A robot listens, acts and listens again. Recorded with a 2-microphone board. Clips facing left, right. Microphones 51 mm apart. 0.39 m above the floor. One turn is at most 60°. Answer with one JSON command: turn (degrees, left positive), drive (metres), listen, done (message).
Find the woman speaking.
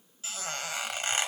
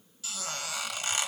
{"listen": true}
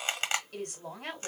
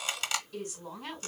{"turn": 60}
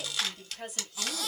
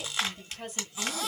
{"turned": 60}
{"done": "Found it: a woman speaking, straight ahead."}